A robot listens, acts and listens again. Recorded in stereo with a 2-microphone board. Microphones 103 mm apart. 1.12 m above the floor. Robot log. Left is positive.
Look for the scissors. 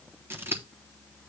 note: The scissors: about 20° right or 160° right.
cmd yaw -20
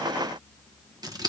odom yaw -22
note: So it is at 135° right.
cmd yaw -135
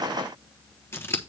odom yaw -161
note: The scissors is now 30° left.
cmd yaw +30
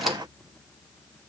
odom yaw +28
cmd idle
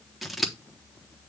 end: Found it: scissors, straight ahead, 1 to 2 m away.